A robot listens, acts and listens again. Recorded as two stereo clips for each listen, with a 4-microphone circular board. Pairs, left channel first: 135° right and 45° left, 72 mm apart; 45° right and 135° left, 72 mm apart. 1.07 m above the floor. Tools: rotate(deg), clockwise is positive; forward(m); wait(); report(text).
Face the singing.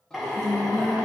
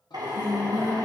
rotate(55)
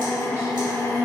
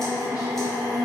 rotate(10)
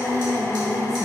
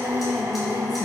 report("Found it: singing, straight ahead, 1 to 2 m away.")